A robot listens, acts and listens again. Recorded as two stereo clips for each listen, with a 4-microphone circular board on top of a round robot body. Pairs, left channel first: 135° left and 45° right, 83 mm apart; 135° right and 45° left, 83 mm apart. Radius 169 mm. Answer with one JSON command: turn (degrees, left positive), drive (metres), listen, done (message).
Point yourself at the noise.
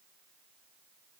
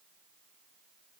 {"listen": true}
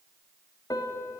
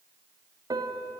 {"turn": 90}
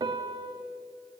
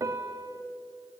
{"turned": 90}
{"turn": -10}
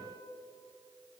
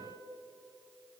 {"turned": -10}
{"done": "Found it: a piano, straight ahead, 1 to 2 m away."}